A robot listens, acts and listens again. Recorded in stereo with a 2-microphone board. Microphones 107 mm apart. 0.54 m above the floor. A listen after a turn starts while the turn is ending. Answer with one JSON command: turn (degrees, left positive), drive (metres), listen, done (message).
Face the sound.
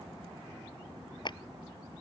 {"turn": 45}
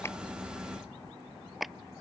{"done": "Found it: a clap, straight ahead."}